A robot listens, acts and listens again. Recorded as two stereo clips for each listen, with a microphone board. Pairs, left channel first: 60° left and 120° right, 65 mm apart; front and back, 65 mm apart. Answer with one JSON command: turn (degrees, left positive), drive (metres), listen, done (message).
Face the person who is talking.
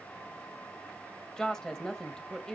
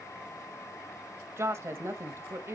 {"turn": 140}
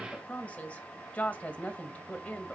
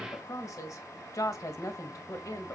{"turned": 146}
{"done": "Found it: a woman speaking, straight ahead."}